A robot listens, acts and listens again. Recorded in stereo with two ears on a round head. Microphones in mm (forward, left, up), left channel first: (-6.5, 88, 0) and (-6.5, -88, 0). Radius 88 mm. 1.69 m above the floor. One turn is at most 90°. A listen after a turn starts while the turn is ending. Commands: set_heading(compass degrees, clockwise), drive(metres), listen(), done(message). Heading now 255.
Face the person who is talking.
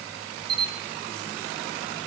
listen()
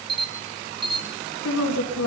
set_heading(165)
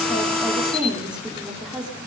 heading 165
done("Facing the woman speaking, over 4 m away.")